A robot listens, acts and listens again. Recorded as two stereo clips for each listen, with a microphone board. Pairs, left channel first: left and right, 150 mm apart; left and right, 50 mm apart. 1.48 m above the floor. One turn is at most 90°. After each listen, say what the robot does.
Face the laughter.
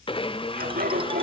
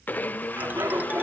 Turn 90° right.
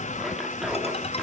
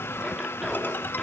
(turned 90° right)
Keep listening.
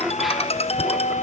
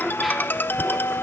Found it: laughter, straight ahead, over 4 m away.